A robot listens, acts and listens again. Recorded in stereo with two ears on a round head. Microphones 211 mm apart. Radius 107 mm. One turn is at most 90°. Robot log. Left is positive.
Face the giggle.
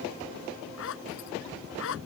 cmd idle
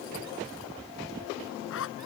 cmd idle
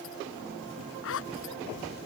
end: I can't make out a giggle to turn to.